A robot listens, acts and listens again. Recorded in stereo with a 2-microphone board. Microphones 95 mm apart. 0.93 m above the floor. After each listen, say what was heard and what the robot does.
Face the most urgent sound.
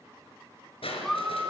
Turn 30° left.
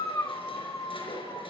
So it is at 145° left. Turn 145° left.
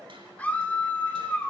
The scream is now 15° left. Turn 15° left.
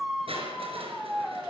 Facing the scream.